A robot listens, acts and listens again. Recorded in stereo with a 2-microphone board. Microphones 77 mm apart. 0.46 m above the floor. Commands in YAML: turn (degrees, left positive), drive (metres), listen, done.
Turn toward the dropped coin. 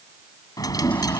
turn: 55
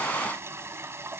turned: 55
listen: true
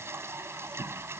done: "I heard a dropped coin, but can't make it out now. It was about straight ahead or 70° left."